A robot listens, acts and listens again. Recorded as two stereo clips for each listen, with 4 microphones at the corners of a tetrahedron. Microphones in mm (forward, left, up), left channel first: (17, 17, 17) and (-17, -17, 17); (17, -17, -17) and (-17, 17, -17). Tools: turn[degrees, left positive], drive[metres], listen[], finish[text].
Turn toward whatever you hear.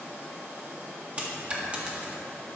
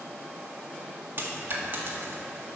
Thought: The dropped coin: 165° left.
Action: turn[165]
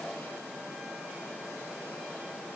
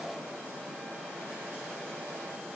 Action: finish[Facing where the dropped coin came from. I can't hear it now.]